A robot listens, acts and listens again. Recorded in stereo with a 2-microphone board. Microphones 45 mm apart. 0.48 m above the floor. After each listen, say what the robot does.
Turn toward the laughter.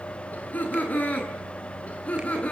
Turn 30° left.
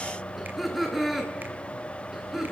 Turn 10° right.
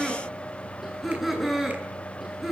Turn 10° right.
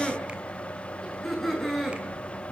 Found it: laughter, straight ahead, over 4 m away.